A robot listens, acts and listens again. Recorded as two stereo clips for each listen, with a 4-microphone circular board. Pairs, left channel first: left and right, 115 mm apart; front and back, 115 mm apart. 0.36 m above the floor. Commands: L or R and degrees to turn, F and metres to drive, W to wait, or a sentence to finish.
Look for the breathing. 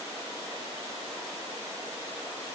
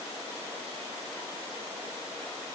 W
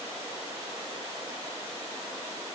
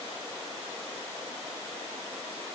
W
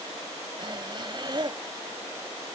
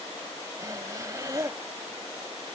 R125
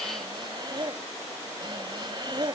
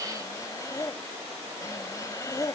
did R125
R55
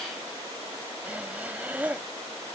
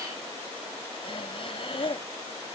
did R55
R15
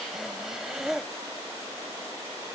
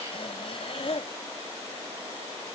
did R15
Found it: breathing, straight ahead.